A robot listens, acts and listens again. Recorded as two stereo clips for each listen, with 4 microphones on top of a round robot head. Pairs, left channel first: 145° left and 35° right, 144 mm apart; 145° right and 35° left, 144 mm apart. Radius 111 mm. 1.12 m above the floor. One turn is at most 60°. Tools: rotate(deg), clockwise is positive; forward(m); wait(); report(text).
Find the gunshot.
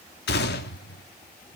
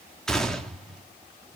rotate(-60)
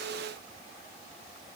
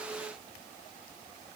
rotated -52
rotate(-60)
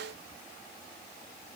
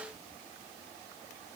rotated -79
report("Facing where the gunshot came from. I can't hear it now.")